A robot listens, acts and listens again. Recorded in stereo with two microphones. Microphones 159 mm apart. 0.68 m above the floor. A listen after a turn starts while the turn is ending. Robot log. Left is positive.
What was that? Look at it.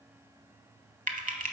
note: The typing on a keyboard: about 60° right or 120° right.
cmd yaw -60
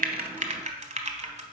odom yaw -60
note: So it is at 55° right.
cmd yaw -55
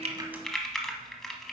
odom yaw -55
end: Facing the typing on a keyboard.